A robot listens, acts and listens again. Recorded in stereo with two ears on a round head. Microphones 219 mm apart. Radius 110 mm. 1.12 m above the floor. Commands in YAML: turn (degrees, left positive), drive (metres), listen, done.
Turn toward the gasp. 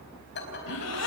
turn: 70
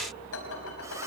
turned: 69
listen: true
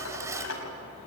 done: "I heard a gasp, but can't make it out now. It was about straight ahead or 40° left."